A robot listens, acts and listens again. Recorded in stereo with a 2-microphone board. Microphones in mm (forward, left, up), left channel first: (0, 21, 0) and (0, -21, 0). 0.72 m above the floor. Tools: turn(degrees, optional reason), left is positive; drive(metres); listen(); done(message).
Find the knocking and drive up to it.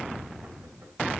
listen()
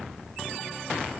listen()
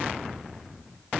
done("I can't make out knocking.")